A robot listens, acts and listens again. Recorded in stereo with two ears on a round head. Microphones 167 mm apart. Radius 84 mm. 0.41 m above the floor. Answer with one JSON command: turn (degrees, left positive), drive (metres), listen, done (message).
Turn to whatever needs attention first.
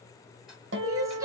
{"turn": -20}
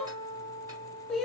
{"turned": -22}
{"done": "Facing the crying."}